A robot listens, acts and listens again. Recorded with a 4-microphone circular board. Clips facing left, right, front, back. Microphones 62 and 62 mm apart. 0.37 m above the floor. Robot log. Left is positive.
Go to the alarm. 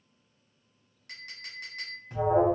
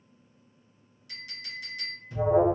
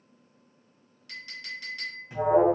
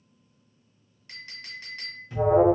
note: The alarm: 65° left.
cmd yaw +65
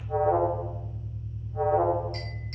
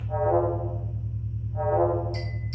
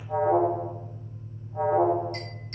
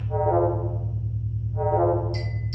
cmd fwd 1.0
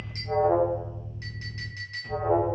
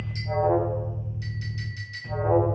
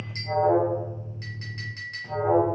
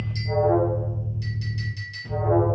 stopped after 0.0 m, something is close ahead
note: The alarm is now 10° right.
cmd yaw -10
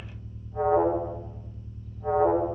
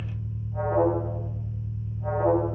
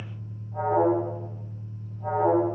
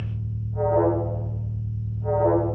end: Blocked. The alarm is further on, straight ahead.